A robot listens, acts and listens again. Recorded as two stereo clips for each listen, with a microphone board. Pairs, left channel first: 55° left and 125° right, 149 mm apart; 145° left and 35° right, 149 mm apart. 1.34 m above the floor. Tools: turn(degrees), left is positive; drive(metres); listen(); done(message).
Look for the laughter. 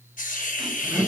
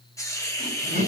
turn(degrees=150)
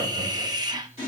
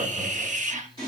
turn(degrees=10)
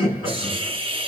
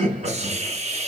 done("Found it: laughter, straight ahead, over 4 m away.")